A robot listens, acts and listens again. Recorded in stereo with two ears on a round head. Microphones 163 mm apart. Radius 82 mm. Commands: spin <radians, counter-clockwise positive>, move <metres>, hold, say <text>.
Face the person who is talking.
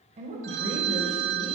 spin -0.61
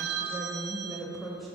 say Found it: a woman speaking, straight ahead, 1 to 2 m away.